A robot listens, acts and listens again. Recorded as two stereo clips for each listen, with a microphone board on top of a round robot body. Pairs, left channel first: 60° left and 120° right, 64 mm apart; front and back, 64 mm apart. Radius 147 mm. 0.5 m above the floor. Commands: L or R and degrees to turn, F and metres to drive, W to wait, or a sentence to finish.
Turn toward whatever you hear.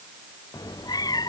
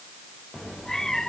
L85
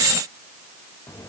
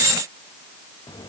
L15
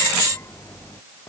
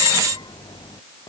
Found it: a cat meowing, straight ahead.